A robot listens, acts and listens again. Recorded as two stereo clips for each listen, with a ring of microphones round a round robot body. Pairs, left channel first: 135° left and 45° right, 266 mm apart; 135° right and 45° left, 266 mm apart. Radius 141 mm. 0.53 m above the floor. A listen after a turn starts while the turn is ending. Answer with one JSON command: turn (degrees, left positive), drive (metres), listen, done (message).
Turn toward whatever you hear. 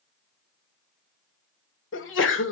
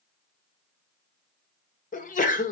{"turn": 170}
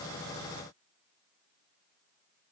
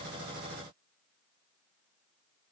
{"done": "I heard a sneeze from this way, but can't make it out now."}